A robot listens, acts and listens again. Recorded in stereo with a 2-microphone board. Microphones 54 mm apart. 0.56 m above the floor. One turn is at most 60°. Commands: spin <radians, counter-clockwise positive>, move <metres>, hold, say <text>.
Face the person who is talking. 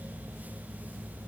hold
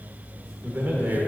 spin -0.61
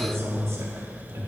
spin -1.05
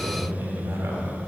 spin -1.05
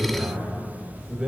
spin -0.35
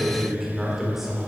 say Found it: a man speaking, straight ahead, 1 to 2 m away.